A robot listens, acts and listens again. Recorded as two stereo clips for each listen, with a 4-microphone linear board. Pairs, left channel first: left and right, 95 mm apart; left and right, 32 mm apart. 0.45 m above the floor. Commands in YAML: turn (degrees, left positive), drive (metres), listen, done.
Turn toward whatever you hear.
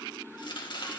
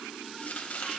turn: 60
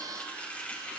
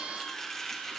turn: 15
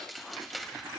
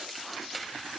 done: "Facing the chopping."